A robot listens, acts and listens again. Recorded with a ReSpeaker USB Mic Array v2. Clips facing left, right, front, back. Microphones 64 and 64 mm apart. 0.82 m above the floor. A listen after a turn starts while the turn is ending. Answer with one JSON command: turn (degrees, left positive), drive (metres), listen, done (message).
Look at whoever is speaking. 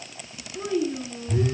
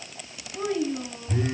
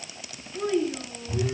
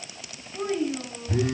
{"turn": -120}
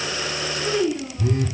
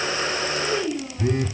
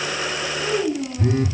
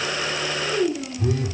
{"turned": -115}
{"done": "Found it: a child speaking, straight ahead."}